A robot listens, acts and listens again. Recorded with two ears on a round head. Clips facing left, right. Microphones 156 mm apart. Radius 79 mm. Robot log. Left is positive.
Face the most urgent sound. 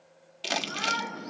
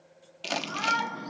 cmd yaw +30
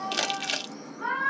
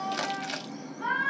note: So it is at 20° right.
cmd yaw -20
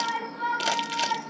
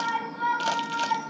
end: Found it: a shout, straight ahead, over 4 m away.